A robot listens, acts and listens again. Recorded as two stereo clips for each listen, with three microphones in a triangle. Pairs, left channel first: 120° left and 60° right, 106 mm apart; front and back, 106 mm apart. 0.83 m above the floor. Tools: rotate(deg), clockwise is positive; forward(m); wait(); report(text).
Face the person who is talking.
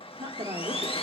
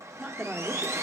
rotate(100)
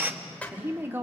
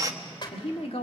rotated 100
rotate(-10)
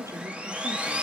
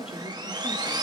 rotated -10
report("Facing the woman speaking.")